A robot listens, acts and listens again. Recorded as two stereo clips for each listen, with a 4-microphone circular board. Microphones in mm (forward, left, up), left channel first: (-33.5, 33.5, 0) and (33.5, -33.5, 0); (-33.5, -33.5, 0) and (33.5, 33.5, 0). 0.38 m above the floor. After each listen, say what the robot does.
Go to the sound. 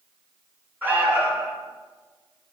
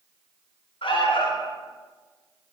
Turn 115° right.
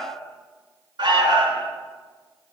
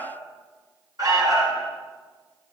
Drive 1.0 m forward.
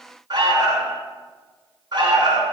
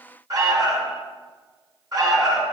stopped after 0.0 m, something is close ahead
Something is in my way. I am facing the alarm but have not reached it.